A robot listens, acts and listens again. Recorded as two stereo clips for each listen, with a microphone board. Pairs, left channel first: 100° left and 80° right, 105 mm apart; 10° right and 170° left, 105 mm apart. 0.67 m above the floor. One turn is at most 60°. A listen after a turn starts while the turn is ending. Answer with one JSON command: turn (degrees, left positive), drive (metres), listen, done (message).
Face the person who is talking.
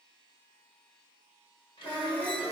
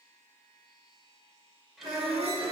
{"turn": 60}
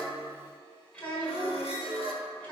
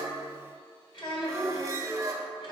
{"turn": 25}
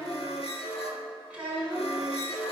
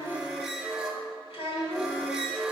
{"done": "Found it: a child speaking, straight ahead, 1 to 2 m away."}